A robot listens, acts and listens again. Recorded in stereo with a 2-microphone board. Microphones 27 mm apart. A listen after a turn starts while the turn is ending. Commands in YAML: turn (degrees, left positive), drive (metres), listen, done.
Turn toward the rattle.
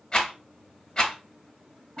turn: 30
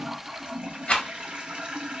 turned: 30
turn: 115
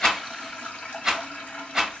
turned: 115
turn: -15
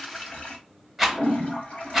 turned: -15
done: "Facing the rattle, under 1 m away."